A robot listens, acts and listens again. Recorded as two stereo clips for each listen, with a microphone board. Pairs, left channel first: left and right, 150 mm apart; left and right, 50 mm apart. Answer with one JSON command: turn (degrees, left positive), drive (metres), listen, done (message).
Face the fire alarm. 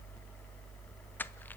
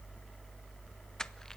{"listen": true}
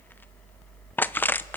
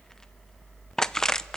{"listen": true}
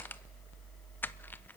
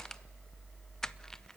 {"done": "I can't make out a fire alarm, only crushing."}